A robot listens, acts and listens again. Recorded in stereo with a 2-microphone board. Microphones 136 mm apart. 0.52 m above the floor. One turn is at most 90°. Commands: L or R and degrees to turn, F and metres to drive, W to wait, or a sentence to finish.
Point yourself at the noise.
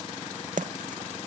R70
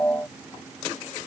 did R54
W
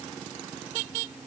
I heard a splash, but can't make it out now. It was about 20° right or 55° right.